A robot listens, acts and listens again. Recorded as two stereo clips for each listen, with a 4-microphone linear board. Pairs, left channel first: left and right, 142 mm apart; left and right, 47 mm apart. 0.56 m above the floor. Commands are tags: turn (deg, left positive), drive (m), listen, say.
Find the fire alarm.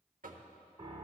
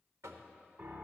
<listen/>
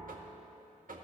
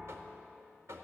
<listen/>
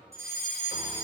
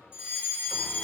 <turn deg="-20"/>
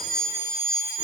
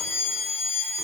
<say>Found it: a fire alarm, straight ahead, 2 to 4 m away.</say>